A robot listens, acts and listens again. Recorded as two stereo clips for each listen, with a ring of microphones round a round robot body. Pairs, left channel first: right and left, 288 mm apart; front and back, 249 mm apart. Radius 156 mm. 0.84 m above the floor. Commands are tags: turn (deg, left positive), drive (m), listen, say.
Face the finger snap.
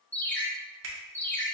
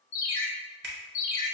<turn deg="135"/>
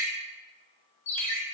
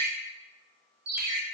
<listen/>
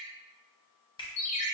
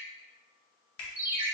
<turn deg="-15"/>
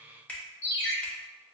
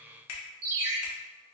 <say>Found it: a finger snap, straight ahead, 1 to 2 m away.</say>